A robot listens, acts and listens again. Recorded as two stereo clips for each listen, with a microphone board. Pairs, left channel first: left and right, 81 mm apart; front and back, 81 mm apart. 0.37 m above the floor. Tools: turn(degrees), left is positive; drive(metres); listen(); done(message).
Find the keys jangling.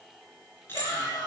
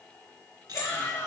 turn(degrees=155)
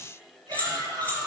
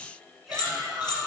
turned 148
turn(degrees=25)
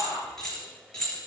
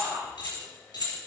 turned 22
turn(degrees=10)
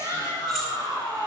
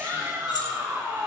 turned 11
listen()
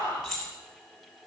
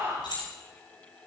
done("Found it: keys jangling, straight ahead, over 4 m away.")